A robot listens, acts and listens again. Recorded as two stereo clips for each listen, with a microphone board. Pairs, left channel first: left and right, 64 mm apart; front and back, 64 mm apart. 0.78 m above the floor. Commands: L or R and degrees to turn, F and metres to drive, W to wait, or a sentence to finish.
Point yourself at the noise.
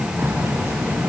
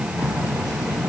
R35
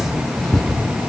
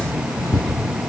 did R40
Facing the keys jangling.